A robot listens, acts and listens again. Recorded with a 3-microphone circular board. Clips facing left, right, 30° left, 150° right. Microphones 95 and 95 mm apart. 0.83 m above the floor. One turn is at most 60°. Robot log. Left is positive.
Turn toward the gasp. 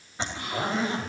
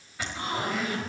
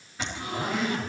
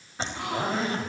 note: The gasp: 150° right.
cmd yaw -60
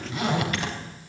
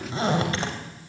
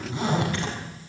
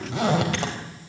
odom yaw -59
note: Nothing new. It was at 90° right.
cmd yaw -60
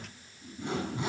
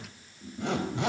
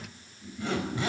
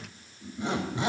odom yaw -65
note: Nothing new. It was at 25° right.
cmd yaw -25
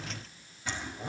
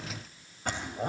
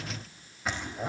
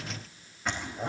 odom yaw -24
end: Facing where the gasp came from. I can't hear it now.